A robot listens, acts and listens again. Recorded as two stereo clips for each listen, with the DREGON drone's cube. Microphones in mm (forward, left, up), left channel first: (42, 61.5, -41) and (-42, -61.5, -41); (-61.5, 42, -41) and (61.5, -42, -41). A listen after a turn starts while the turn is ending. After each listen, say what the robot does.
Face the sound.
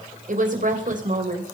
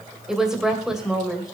Turn 120° right.
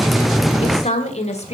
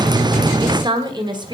Turn 20° left.
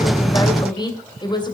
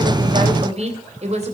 Facing the woman speaking, 2 to 4 m away.